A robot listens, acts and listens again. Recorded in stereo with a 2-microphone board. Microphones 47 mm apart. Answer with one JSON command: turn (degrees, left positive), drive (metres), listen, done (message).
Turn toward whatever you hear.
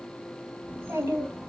{"turn": -65}
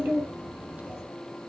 {"turn": -30}
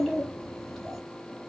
{"done": "Found it: a child speaking, straight ahead, 2 to 4 m away."}